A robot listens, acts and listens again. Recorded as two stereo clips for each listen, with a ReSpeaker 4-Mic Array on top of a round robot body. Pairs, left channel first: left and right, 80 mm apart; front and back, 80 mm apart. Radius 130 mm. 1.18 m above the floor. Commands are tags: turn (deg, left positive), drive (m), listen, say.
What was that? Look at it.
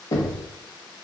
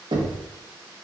<turn deg="145"/>
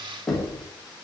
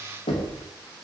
<say>Found it: knocking, straight ahead, 1 to 2 m away.</say>